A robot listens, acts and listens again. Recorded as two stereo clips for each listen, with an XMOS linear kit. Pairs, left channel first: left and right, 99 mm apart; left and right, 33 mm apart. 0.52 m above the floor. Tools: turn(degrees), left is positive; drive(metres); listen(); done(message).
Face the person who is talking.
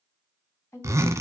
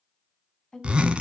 turn(degrees=30)
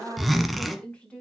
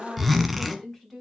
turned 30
turn(degrees=15)
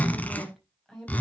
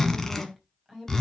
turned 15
done("Facing the woman speaking.")